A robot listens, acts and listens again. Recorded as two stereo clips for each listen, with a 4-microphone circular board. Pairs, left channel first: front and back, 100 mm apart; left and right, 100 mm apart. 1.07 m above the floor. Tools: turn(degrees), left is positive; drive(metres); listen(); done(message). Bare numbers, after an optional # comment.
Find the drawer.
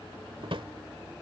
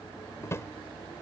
# The drawer: 150° left.
turn(150)
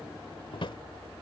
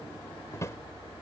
# The drawer is now 30° left.
turn(30)
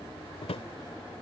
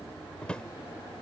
# The drawer is now 10° left.
turn(10)
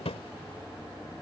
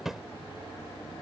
done("Facing the drawer.")